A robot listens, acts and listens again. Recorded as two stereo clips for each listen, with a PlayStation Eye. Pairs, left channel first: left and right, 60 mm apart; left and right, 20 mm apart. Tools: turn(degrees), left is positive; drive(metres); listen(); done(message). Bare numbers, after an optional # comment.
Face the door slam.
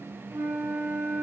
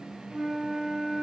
listen()
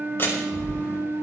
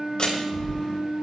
# The door slam: about 40° left or 140° left.
turn(40)
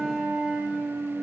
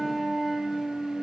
listen()
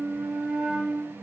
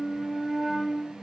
done("I heard a door slam, but can't make it out now. It was about straight ahead or 100° left.")